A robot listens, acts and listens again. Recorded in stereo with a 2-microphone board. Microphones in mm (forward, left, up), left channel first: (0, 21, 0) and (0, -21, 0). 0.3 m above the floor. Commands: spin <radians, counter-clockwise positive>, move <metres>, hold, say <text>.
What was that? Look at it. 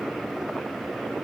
hold
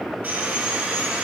spin -0.87
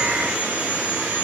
spin -1.31
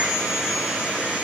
spin -0.35
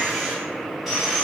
say Facing the sawing, 1 to 2 m away.